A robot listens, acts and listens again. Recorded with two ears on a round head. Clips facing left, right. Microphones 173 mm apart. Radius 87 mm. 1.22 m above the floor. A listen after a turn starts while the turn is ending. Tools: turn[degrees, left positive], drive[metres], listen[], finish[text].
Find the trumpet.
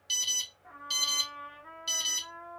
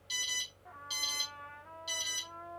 Action: turn[90]
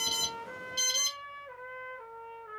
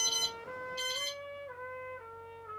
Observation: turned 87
Thought: So it is at 10° left.
Action: turn[10]
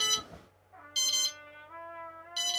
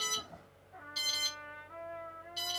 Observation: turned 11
Action: finish[Facing the trumpet, 2 to 4 m away.]